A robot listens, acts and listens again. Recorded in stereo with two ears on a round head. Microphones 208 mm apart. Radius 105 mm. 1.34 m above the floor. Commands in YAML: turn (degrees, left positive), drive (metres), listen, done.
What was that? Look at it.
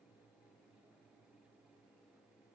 listen: true
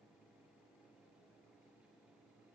listen: true
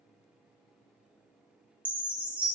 turn: -30
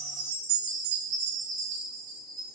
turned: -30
turn: -145
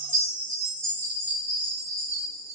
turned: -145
turn: -10
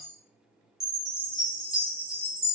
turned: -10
done: "Found it: a chime, straight ahead, under 1 m away."